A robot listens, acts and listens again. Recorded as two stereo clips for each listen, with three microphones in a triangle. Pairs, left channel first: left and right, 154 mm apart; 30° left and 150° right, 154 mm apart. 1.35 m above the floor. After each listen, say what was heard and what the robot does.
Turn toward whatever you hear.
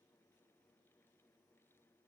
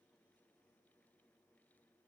Keep listening.
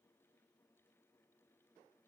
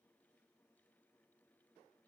Keep listening.
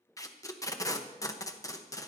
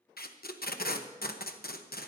The tape being pulled: 20° left. Turn 20° left.
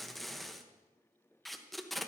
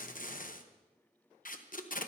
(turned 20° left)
Found it: tape being pulled, straight ahead.